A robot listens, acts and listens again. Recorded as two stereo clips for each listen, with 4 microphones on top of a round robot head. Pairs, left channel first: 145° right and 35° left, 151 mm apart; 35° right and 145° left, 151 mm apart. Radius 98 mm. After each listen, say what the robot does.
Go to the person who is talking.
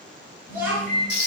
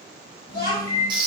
Turn 40° right.
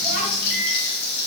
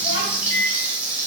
Keep listening.
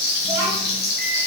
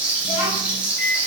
Turn 20° right.
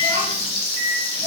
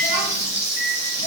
Keep listening.
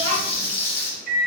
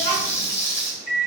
Keep listening.
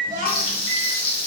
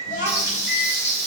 Drive 1.0 m forward.
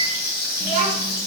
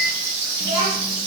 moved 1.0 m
Drive 1.0 m forward.
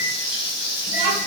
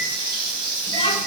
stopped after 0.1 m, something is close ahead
Keep listening.
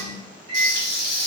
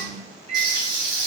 I am next to the child speaking.